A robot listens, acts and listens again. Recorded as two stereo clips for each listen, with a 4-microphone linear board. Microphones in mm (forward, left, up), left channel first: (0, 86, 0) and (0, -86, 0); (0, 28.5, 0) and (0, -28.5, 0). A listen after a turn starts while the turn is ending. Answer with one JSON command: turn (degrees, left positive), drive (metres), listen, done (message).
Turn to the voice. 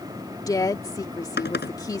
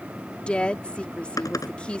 {"turn": 20}
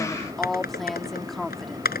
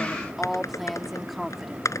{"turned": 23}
{"done": "Found it: a woman speaking, straight ahead."}